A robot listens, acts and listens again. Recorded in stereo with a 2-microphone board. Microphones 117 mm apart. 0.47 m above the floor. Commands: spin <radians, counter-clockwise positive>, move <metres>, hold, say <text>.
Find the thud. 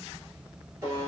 hold
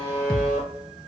spin 0.52
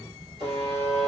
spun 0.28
hold
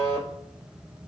say I heard a thud, but can't make it out now. It was about 10° right or 160° left.